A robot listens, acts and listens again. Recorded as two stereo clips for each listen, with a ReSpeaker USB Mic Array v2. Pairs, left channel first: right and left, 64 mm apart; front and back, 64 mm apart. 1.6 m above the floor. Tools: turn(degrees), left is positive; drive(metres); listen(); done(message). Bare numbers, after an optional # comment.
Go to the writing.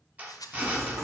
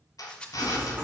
# The writing: 120° left.
turn(120)
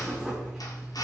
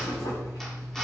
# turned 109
# The writing is now 10° left.
turn(10)
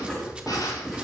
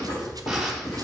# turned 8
drive(1.0)
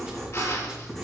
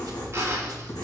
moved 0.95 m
drive(1.0)
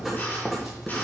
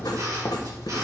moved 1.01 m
drive(1.0)
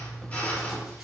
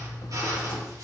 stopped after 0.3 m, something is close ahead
done("I am next to the writing.")